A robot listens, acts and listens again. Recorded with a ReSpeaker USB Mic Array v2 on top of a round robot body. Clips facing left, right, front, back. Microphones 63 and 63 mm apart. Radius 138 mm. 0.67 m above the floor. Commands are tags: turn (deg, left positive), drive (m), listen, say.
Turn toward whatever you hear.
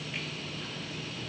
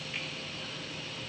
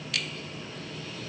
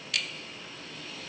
<listen/>
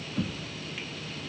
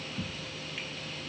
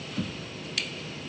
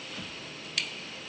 <turn deg="60"/>
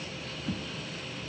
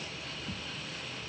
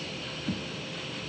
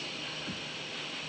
<turn deg="25"/>
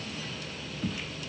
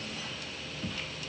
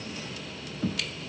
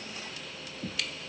<say>Found it: knocking, straight ahead.</say>